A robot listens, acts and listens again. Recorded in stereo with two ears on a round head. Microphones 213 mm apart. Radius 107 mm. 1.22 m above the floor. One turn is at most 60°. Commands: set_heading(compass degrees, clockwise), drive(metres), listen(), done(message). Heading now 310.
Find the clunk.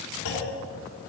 set_heading(250)
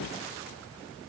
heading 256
listen()
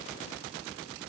done("I heard a clunk, but can't make it out now. It was about 15° left or 60° left.")